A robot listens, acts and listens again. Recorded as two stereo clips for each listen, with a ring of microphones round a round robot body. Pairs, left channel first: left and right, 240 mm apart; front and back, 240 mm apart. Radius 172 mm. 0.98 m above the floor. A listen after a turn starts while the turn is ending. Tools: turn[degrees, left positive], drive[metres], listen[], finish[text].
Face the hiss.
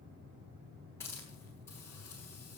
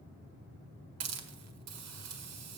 Thought: The hiss: 175° left.
Action: turn[175]
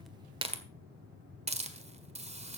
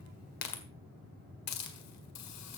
Thought: The hiss is now 25° right.
Action: turn[-25]
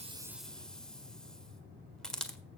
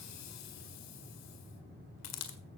Action: finish[Found it: a hiss, straight ahead.]